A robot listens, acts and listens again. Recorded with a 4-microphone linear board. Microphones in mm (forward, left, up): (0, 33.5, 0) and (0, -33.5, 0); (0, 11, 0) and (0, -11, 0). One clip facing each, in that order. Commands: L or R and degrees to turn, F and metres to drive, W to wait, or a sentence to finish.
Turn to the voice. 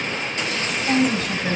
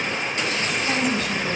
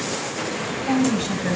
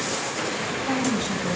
L40
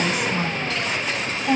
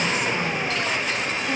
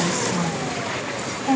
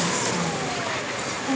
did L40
L100
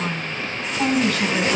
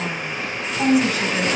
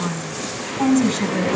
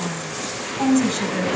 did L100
R10
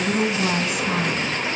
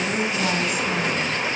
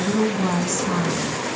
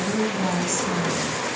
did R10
Facing the woman speaking.